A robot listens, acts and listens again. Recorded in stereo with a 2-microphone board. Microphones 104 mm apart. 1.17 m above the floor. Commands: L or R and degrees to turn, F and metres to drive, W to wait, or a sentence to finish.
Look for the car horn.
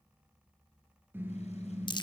R20
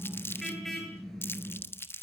Found it: a car horn, straight ahead.